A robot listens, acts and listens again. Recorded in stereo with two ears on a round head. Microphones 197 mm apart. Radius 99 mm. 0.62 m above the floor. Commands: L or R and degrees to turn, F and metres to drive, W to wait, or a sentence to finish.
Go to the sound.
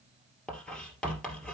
L30
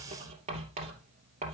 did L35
R30
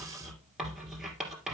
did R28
F1.0
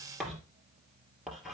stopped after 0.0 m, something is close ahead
Blocked. The writing is further on, straight ahead.